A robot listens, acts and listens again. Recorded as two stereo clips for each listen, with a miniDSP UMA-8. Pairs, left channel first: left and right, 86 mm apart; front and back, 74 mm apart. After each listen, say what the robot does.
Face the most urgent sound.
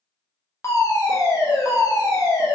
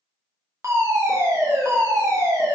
Turn 135° left.
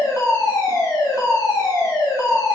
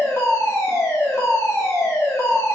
Turn 45° left.
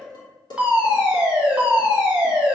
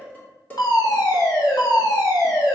Turn 15° right.
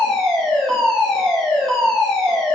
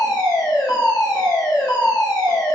Found it: a fire alarm, straight ahead, 1 to 2 m away.